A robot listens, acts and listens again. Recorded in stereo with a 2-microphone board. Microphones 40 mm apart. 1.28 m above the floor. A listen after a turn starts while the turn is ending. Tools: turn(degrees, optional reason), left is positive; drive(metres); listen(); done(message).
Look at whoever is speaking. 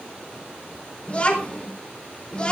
turn(degrees=25, reason="The child speaking: about 25° left or 155° left.")
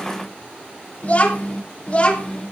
turn(degrees=30, reason="The child speaking: about 30° left or 150° left.")
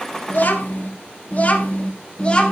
turn(degrees=25, reason="The child speaking: about 25° left or 155° left.")
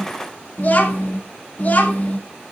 turn(degrees=135, reason="So it is at 135° left.")
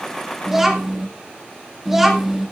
done("Found it: a child speaking, straight ahead.")